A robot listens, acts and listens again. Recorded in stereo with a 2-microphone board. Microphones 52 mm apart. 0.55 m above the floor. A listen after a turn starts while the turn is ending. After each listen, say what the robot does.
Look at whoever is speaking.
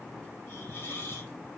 Keep listening.
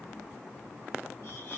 Keep listening.
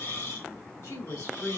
Turn 90° left.
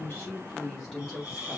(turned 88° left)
Found it: a woman speaking, straight ahead, 2 to 4 m away.